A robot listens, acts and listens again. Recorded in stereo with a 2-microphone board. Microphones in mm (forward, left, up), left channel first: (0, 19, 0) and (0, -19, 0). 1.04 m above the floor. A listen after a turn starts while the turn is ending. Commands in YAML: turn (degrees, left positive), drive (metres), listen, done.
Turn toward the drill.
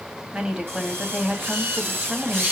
turn: -65
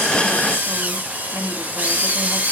turn: -45
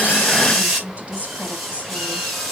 turn: -10
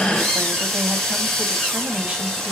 done: "Found it: a drill, straight ahead."